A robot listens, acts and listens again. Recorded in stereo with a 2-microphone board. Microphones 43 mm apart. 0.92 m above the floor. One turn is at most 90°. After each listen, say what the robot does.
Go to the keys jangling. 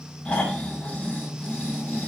Keep listening.
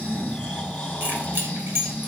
Turn 55° right.
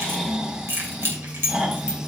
Turn 70° right.
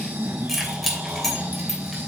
Drive 1.0 m forward.
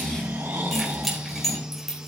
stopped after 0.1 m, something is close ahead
Something is in my way. I am facing the keys jangling but have not reached it.